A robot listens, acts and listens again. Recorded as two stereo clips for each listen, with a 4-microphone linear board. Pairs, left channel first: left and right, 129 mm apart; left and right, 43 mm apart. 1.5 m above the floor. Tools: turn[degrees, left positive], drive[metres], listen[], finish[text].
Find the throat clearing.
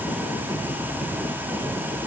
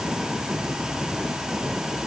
Action: listen[]
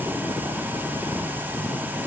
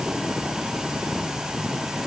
Action: listen[]
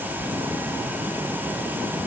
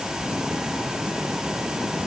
Action: finish[I can't make out throat clearing to turn to.]